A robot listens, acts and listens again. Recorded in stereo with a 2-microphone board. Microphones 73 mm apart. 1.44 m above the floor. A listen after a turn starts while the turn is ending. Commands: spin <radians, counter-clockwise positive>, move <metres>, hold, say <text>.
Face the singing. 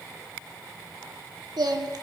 spin -1.22
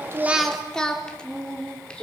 spin 0.26
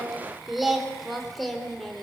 say Facing the singing.